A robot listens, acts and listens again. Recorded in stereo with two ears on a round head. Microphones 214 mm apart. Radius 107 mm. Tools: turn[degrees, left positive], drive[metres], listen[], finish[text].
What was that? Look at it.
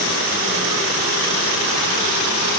Action: listen[]
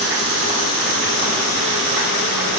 Action: listen[]
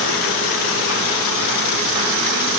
Action: finish[I can't make out anything to turn to.]